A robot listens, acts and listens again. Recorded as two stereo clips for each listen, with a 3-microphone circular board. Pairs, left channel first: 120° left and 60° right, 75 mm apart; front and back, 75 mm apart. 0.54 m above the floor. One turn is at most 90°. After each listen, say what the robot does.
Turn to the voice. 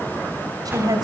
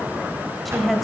Turn 90° right.
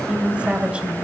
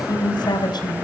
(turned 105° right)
Turn 15° left.
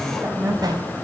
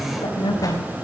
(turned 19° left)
Facing the woman speaking, 2 to 4 m away.